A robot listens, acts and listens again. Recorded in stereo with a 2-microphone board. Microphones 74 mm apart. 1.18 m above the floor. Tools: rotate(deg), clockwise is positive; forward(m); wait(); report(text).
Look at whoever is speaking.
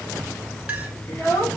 rotate(-30)
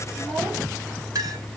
wait()
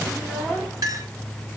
wait()
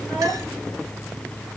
report("I heard a child speaking, but can't make it out now. It was about straight ahead or 120° left.")